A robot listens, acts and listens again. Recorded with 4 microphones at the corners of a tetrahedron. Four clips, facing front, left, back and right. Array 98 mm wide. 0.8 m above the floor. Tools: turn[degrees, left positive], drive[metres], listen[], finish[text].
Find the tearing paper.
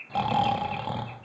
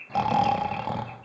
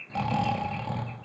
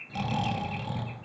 Action: listen[]
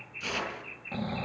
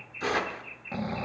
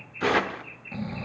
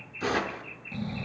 Thought: The tearing paper: straight behind.
Action: turn[180]
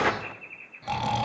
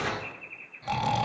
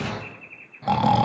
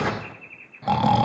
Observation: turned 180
Thought: The tearing paper is now 20° right.
Action: turn[-20]
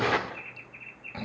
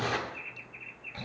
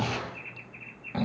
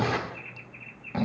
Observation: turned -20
Action: finish[Facing the tearing paper, under 1 m away.]